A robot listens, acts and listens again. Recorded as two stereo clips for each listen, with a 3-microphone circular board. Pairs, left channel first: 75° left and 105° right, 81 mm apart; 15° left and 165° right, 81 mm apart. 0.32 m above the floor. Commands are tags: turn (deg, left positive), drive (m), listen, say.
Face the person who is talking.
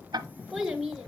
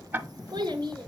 <turn deg="170"/>
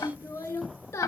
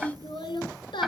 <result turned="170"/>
<turn deg="20"/>
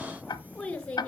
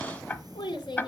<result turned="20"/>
<say>Facing the child speaking.</say>